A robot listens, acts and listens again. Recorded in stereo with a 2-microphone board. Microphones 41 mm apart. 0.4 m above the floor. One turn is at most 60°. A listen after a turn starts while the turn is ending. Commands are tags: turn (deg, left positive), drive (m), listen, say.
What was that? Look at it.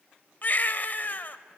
<turn deg="45"/>
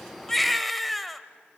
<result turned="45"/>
<say>Facing the baby crying.</say>